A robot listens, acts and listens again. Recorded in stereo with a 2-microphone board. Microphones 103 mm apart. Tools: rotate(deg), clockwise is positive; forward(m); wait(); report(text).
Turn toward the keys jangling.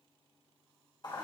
wait()
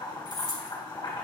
rotate(45)
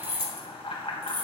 rotate(55)
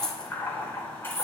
rotate(-25)
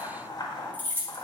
rotate(-20)
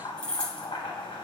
rotate(-10)
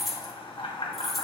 report("Facing the keys jangling, 2 to 4 m away.")